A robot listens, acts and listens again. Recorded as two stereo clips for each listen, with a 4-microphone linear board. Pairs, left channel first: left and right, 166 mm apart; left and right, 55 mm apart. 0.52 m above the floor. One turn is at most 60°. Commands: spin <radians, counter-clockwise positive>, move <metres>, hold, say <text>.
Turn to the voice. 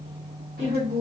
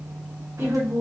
spin -0.79
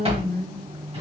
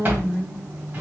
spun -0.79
spin -1.05
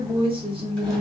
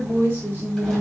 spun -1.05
spin -0.70
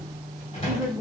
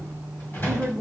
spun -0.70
spin -0.17
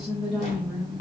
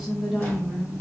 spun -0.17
say Facing the woman speaking, 1 to 2 m away.